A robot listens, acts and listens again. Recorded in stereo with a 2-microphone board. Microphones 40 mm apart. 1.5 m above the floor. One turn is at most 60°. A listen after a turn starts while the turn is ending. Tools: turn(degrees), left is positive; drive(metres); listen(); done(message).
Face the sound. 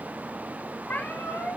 turn(degrees=60)
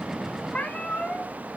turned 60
turn(degrees=20)
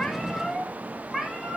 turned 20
turn(degrees=-10)
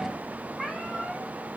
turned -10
turn(degrees=-10)
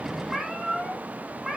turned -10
turn(degrees=-10)
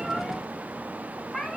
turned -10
done("Facing the cat meowing, 2 to 4 m away.")